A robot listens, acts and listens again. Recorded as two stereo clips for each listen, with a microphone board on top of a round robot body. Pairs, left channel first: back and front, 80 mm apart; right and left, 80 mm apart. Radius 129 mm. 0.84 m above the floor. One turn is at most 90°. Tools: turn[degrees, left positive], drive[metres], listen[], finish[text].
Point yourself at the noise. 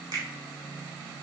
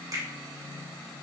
Thought: The finger snap: 40° left.
Action: turn[40]
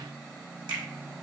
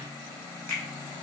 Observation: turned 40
Thought: The finger snap is now 25° right.
Action: turn[-25]
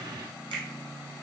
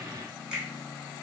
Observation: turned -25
Thought: The finger snap is now 10° left.
Action: turn[10]
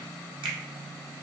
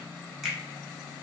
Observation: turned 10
Action: finish[Found it: a finger snap, straight ahead.]